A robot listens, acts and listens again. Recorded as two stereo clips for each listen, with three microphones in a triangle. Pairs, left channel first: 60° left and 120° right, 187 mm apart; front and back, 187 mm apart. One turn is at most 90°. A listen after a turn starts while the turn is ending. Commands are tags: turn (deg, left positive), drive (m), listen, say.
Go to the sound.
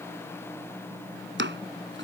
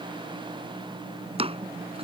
<turn deg="-90"/>
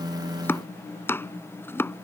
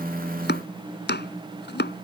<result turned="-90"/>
<turn deg="-20"/>
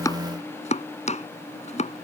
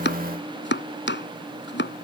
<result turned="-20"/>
<drive m="1.0"/>
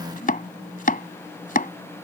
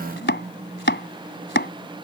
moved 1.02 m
<turn deg="20"/>
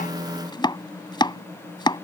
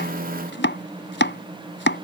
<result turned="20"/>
<drive m="1.0"/>
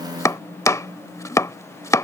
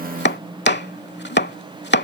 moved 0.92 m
<turn deg="-15"/>
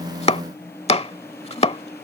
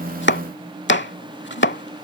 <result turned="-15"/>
<drive m="1.0"/>
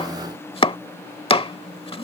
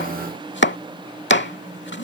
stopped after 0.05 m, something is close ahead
<say>Arrived at the chopping, straight ahead.</say>